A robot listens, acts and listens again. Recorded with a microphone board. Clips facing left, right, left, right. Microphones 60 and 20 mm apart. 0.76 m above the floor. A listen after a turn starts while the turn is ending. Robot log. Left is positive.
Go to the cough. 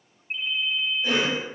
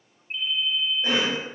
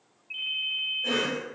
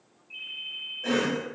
note: The cough: about 55° right or 125° right.
cmd yaw -55
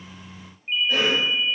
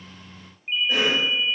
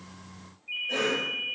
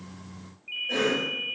note: So it is at 15° right.
cmd yaw -15
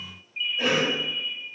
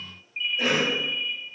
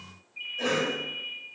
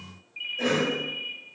cmd fwd 1.0
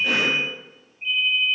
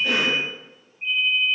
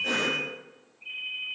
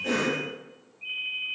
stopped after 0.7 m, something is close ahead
end: Arrived at the cough, straight ahead.